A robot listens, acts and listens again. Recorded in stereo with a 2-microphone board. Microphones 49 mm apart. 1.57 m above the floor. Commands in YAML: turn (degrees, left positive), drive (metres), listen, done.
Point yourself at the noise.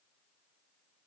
listen: true
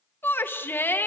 turn: 45
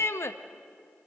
turn: 85
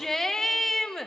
turn: 10
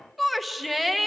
done: "Facing the shout, 1 to 2 m away."